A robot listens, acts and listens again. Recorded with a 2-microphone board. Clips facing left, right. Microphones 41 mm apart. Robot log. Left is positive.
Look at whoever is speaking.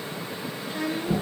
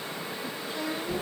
note: The child speaking: about 40° left or 140° left.
cmd yaw +40
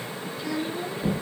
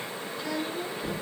end: Facing the child speaking.